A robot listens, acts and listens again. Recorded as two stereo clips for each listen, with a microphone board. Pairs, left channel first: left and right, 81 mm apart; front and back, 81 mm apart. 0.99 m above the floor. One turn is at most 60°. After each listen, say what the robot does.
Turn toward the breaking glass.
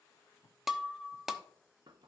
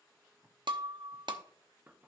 Turn 60° right.
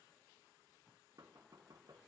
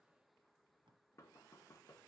Turn 60° right.
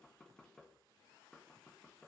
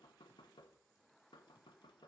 Turn 55° right.
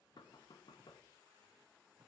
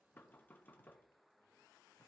I heard breaking glass from this way, but can't make it out now.